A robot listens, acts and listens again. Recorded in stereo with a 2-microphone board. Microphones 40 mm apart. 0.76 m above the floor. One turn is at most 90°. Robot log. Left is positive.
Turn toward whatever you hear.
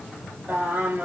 note: The singing: about 45° right or 135° right.
cmd yaw -45
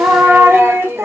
note: So it is at 100° right.
cmd yaw -90
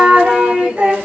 note: The singing is now 35° right.
cmd yaw -35
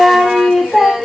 end: Facing the singing.